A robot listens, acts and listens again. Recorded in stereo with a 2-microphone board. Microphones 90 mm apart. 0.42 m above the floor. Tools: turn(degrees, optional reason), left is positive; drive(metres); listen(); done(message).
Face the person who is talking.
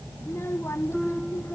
turn(degrees=30, reason="The child speaking: about 30° left or 150° left.")
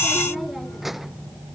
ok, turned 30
done("Facing the child speaking.")